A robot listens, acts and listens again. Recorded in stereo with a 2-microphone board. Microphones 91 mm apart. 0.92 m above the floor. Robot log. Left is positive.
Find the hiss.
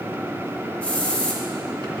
cmd yaw +30
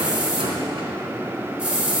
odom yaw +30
note: So it is at 15° right.
cmd yaw -15
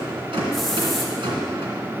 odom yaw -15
cmd idle
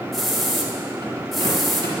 end: Facing the hiss, 1 to 2 m away.